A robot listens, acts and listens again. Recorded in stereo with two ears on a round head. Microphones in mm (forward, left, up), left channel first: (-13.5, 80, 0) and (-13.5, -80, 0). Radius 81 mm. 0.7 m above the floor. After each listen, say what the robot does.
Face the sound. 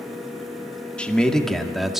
Turn 30° left.
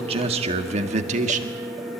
Turn 40° right.
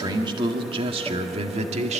Turn 35° right.
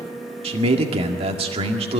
Turn 30° right.
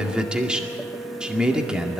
Found it: a man speaking, straight ahead.